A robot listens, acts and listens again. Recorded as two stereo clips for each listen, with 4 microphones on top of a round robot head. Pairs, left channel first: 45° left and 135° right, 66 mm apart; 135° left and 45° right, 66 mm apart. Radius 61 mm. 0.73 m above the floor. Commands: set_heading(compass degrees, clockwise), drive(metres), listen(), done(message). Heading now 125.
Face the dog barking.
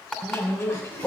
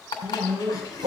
set_heading(150)
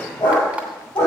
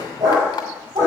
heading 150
done("Found it: a dog barking, straight ahead.")